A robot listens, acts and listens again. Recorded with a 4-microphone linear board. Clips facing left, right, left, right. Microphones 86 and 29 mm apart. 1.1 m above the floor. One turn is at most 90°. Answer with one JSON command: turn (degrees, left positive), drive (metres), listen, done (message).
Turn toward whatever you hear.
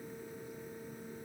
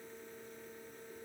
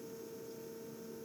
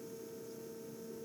{"listen": true}
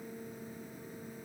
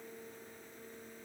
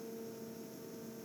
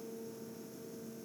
{"listen": true}
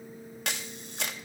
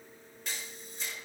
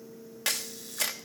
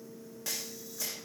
{"turn": 90}
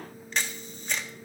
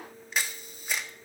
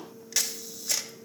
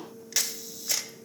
{"done": "Facing the camera shutter, under 1 m away."}